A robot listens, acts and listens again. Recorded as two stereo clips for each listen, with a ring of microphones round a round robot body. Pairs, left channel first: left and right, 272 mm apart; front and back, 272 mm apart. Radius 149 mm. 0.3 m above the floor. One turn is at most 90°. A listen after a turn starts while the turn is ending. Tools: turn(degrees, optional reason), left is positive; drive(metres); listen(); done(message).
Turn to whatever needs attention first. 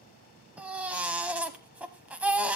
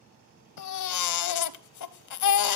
done("Facing the baby crying.")